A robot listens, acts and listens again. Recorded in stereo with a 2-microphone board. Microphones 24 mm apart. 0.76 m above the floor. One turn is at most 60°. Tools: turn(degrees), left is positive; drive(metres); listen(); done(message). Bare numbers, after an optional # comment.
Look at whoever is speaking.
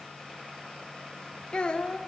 # The child speaking: about 40° left or 140° left.
turn(40)
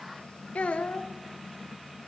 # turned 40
# So it is at 95° left.
turn(60)
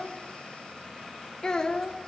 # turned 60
# The child speaking is now 35° left.
turn(35)
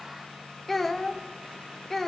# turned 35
# The child speaking is now 15° left.
turn(15)
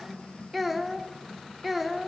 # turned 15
done("Facing the child speaking.")